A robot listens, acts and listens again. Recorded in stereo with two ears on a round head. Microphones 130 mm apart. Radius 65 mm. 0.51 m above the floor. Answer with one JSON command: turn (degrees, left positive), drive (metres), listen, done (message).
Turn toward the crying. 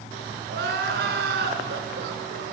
{"turn": -90}
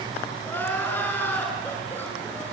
{"turn": 15}
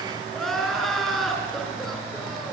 {"done": "Facing the crying."}